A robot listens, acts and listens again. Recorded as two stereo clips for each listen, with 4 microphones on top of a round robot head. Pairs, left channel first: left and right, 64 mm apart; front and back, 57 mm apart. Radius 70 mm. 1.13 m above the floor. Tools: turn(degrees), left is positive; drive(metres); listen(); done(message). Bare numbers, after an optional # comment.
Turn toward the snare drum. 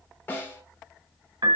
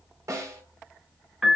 # The snare drum: 150° left.
turn(150)
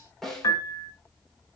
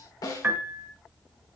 done("Facing the snare drum, 2 to 4 m away.")